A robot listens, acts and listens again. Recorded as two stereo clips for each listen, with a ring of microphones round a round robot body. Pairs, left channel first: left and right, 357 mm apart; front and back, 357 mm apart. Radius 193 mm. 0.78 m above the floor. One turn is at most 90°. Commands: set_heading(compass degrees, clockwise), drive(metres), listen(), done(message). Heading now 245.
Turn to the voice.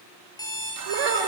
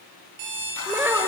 set_heading(335)
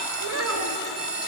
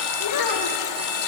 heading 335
set_heading(5)
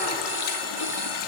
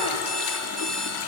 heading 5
listen()
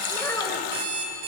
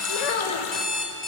done("Found it: a child speaking, straight ahead.")